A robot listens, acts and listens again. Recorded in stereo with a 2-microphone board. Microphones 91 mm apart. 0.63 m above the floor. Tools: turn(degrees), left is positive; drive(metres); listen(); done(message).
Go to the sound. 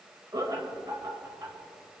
turn(degrees=-45)
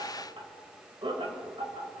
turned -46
turn(degrees=-90)
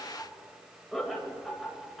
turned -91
drive(metres=1.0)
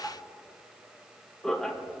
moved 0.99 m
drive(metres=1.0)
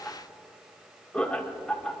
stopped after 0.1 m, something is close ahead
turn(degrees=15)
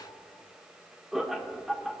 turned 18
done("I am next to the laughter.")